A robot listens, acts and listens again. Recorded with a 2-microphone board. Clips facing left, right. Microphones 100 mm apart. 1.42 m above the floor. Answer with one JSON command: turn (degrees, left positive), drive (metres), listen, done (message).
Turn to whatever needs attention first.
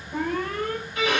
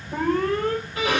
{"turn": -70}
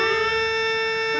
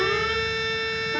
{"listen": true}
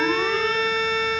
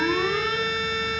{"listen": true}
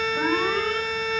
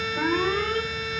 {"done": "Found it: an alarm, straight ahead."}